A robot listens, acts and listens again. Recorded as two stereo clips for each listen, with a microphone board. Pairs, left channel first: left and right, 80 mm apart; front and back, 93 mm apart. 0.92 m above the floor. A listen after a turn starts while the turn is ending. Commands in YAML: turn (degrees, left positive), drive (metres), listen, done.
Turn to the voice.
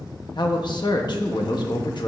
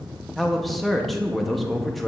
turn: 90
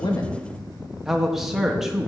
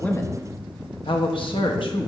done: "Facing the man speaking, 1 to 2 m away."